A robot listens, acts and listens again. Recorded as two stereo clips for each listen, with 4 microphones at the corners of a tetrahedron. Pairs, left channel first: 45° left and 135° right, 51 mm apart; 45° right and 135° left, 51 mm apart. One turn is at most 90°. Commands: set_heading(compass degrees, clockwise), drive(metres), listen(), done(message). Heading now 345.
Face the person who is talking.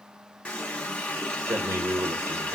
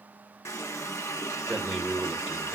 set_heading(75)
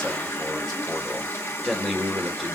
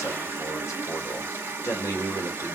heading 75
set_heading(110)
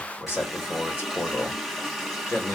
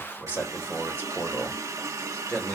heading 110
set_heading(100)
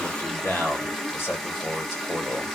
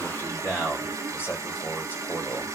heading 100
done("Facing the man speaking, 1 to 2 m away.")